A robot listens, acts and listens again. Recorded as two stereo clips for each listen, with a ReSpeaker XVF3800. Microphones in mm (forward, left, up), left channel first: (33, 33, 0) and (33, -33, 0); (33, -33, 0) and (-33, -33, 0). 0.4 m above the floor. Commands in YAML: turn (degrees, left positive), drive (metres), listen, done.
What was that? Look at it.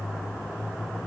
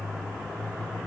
listen: true
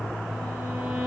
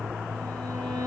turn: -170
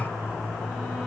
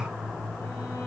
listen: true
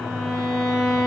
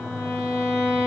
done: "Facing the violin."